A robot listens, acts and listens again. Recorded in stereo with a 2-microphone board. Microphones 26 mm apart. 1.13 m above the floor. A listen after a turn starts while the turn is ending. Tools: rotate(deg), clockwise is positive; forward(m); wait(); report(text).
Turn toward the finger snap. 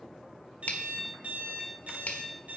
rotate(-60)
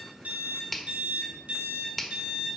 report("Found it: a finger snap, straight ahead, 1 to 2 m away.")